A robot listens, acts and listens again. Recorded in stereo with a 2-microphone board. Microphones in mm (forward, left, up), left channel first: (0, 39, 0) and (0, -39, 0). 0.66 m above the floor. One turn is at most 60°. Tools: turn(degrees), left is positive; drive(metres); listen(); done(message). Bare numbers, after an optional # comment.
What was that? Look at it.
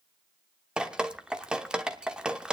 turn(-30)
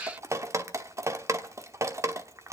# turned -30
# So it is at 135° right.
turn(-60)
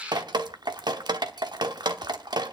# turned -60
# The dripping is now 80° right.
turn(-60)
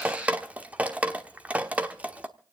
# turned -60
# The dripping is now 20° right.
turn(-20)
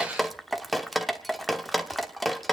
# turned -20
done("Facing the dripping.")